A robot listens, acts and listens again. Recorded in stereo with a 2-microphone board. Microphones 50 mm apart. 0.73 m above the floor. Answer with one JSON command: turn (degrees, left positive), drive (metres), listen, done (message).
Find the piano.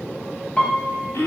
{"turn": 25}
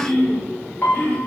{"turn": 130}
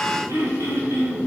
{"listen": true}
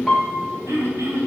{"done": "Facing the piano, 1 to 2 m away."}